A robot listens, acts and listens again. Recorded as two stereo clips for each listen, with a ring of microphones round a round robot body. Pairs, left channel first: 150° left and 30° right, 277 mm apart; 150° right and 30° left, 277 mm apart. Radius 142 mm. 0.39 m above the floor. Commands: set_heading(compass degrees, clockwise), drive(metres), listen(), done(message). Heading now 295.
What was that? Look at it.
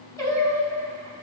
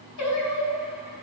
set_heading(65)
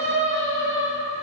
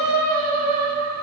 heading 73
set_heading(58)
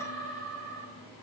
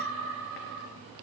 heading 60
done("Facing the singing, 2 to 4 m away.")